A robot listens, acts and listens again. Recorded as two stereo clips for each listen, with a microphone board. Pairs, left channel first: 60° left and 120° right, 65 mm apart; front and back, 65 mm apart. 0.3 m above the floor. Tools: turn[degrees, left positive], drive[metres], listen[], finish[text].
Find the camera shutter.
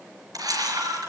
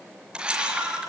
Thought: The camera shutter: 105° right.
Action: turn[-105]
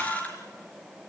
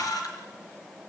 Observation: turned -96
Thought: The camera shutter is now 10° right.
Action: turn[-10]
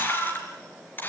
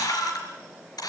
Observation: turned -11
Action: finish[Found it: a camera shutter, straight ahead, over 4 m away.]